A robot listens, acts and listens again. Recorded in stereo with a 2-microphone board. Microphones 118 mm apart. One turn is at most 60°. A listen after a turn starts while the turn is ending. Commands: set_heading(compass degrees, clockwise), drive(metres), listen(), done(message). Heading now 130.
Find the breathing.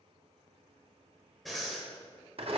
set_heading(100)
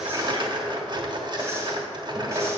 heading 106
listen()
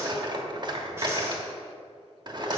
listen()
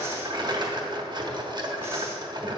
done("I heard breathing, but can't make it out now. It was about 25° right or 155° left.")